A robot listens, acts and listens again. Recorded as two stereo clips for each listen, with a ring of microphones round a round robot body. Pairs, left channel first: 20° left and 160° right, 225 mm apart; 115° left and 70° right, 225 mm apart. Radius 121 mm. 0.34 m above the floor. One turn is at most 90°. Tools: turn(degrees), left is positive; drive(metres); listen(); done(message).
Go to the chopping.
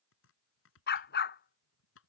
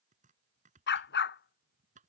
turn(degrees=-10)
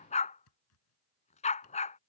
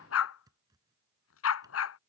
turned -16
drive(metres=1.0)
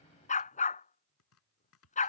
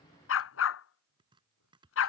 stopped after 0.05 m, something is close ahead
done("Something is in my way. I am facing the chopping but have not reached it.")